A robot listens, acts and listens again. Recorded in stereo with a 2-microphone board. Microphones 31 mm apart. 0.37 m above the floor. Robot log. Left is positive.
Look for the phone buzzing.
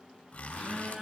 note: The phone buzzing: about 45° right or 135° right.
cmd yaw -45
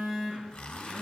end: Found it: a phone buzzing, straight ahead.